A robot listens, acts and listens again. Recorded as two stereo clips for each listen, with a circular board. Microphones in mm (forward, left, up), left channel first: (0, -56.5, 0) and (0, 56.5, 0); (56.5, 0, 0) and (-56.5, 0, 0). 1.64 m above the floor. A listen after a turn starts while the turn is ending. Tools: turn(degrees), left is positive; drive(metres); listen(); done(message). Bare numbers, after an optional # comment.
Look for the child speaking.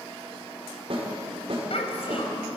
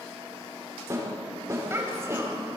# The child speaking: 115° right.
turn(-115)
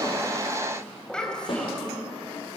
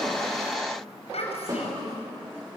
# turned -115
# The child speaking is now 10° right.
turn(-10)
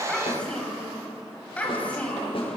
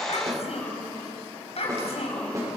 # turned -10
# The child speaking is now 15° right.
turn(-15)
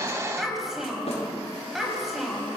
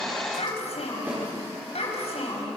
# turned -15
done("Found it: a child speaking, straight ahead, over 4 m away.")